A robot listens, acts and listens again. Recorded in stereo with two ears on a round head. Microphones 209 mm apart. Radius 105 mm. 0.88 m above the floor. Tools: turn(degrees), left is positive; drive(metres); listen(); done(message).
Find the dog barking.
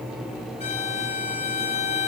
listen()
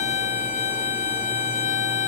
listen()
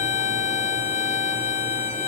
done("I can't make out a dog barking, only a violin.")